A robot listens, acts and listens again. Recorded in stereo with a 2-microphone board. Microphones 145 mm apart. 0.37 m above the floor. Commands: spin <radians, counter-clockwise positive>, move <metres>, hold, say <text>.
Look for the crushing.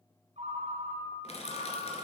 spin 0.79
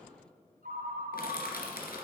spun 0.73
spin 1.57
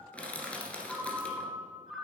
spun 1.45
spin 0.17
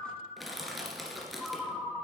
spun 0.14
say Facing the crushing.